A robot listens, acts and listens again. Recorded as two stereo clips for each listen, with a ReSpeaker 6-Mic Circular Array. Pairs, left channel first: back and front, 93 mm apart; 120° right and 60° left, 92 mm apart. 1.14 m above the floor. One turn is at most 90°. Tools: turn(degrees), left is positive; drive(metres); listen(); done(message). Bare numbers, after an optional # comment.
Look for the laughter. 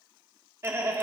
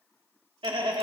# The laughter: 60° left.
turn(60)
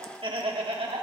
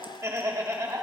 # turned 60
done("Facing the laughter, 1 to 2 m away.")